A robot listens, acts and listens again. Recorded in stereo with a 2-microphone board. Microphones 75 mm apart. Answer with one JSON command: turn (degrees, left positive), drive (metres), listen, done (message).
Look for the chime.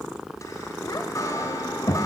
{"turn": 45}
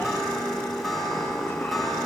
{"done": "Found it: a chime, straight ahead."}